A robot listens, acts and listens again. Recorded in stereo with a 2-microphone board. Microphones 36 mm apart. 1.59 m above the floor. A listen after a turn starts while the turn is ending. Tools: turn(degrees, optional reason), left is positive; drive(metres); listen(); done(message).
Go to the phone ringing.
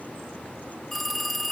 turn(degrees=30)
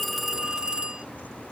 turn(degrees=-25, reason="So it is at 25° right.")
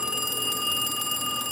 drive(metres=1.0)
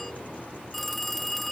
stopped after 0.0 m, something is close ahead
done("Something is in my way. I am facing the phone ringing but have not reached it.")